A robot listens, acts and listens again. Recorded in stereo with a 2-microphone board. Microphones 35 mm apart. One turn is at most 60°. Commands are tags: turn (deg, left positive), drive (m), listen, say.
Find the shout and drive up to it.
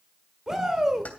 <turn deg="-15"/>
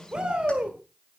<turn deg="-60"/>
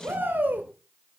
<turn deg="-60"/>
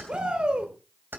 <turn deg="-25"/>
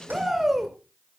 <drive m="1.0"/>
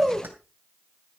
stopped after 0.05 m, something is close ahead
<say>Blocked. The shout is further on, straight ahead.</say>